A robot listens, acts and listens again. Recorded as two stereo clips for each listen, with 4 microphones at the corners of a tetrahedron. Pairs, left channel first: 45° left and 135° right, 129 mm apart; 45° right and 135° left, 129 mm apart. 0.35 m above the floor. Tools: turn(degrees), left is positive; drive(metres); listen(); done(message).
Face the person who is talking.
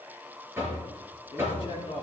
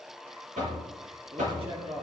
turn(degrees=90)
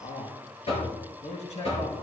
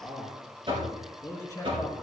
turn(degrees=20)
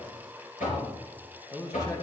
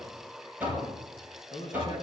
turn(degrees=-15)
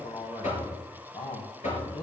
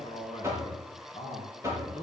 done("Facing the man speaking, 2 to 4 m away.")